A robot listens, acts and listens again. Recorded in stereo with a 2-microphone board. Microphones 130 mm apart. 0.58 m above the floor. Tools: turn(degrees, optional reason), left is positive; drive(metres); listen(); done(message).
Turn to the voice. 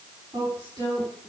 turn(degrees=-30, reason="The woman speaking: about 30° right or 150° right.")
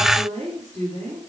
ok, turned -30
turn(degrees=-115, reason="So it is at 115° right.")
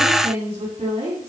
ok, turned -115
turn(degrees=-50, reason="The woman speaking is now 50° right.")
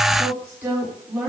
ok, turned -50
turn(degrees=-15, reason="The woman speaking is now 15° right.")
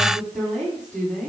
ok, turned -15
done("Found it: a woman speaking, straight ahead, over 4 m away.")